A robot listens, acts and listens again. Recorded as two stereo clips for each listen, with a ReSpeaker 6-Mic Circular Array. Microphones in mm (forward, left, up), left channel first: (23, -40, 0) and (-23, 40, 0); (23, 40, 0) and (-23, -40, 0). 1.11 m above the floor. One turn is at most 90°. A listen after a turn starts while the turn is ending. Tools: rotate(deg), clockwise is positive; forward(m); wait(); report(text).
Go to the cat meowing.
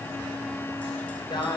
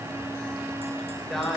wait()
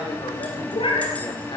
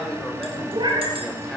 rotate(80)
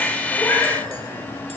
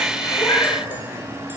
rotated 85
forward(1.0)
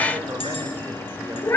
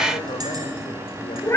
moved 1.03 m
forward(1.0)
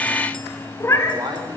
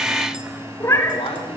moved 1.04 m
forward(1.0)
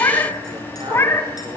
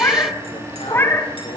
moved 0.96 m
forward(1.0)
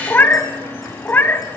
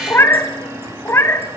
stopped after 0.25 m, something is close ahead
report("I am next to the cat meowing.")